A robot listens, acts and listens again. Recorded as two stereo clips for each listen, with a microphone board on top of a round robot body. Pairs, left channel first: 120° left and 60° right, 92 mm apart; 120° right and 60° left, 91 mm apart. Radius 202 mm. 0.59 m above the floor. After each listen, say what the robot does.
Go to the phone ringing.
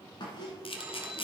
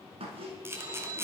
Turn 15° left.
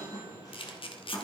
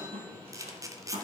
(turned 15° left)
Keep listening.
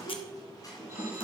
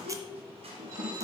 Keep listening.
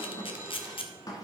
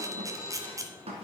Drive 1.0 m forward.
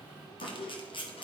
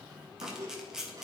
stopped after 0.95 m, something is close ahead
Keep listening.
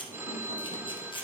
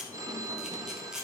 Turn 10° left.
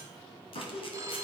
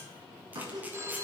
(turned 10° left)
Arrived at the phone ringing, straight ahead.